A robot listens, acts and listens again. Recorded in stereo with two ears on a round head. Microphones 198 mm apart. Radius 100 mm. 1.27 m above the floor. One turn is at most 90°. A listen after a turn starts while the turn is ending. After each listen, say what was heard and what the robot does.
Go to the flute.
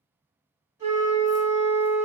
The flute: about 15° right or 165° right. Turn 15° right.
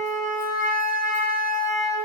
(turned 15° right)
Drive 1.0 m forward.
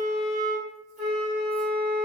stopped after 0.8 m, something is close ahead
I am next to the flute.